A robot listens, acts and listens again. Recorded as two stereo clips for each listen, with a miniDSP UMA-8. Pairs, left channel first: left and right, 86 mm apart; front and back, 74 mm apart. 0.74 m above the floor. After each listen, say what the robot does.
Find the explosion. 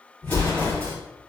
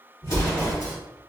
Turn 20° left.
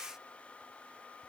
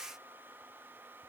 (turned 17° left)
Facing where the explosion came from. I can't hear it now.